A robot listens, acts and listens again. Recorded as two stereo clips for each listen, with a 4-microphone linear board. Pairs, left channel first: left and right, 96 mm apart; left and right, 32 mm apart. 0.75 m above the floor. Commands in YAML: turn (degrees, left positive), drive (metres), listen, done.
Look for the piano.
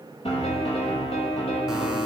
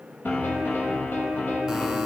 turn: 90
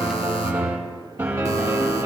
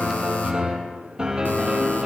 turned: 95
turn: -20
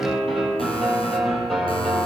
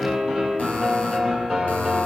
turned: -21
done: "Found it: a piano, straight ahead, over 4 m away."